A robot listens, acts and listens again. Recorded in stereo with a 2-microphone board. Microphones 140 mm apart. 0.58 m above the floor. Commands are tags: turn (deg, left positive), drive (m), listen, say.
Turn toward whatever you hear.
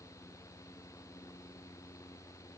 <listen/>
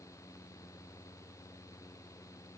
<listen/>
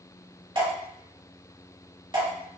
<turn deg="-35"/>
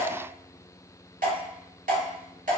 <turn deg="-110"/>
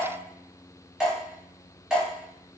<say>Found it: dripping, straight ahead.</say>